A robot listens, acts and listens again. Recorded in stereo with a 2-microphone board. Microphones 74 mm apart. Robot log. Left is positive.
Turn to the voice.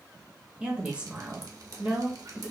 note: The woman speaking: about 15° right or 165° right.
cmd yaw -15
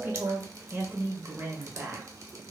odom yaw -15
note: So it is at 150° right.
cmd yaw -150
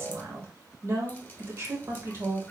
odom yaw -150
note: The woman speaking is now 50° right.
cmd yaw -50
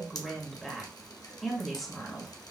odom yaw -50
end: Found it: a woman speaking, straight ahead, 1 to 2 m away.